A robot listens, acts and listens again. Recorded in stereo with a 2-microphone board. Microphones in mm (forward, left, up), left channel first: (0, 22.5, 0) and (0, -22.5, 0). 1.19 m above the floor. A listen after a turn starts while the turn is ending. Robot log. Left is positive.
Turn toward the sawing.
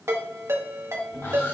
note: The sawing: about 60° left or 120° left.
cmd yaw +60
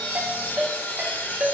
note: So it is at 50° left.
cmd yaw +50
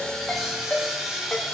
note: The sawing is now 10° right.
cmd yaw -10
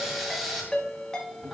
end: Facing the sawing.